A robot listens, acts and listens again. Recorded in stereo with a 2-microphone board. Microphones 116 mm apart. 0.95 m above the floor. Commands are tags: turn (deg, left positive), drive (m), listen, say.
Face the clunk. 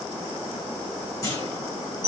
<turn deg="25"/>
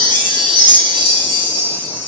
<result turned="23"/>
<listen/>
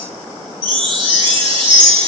<say>I heard a clunk, but can't make it out now. It was about 5° left or 130° left.</say>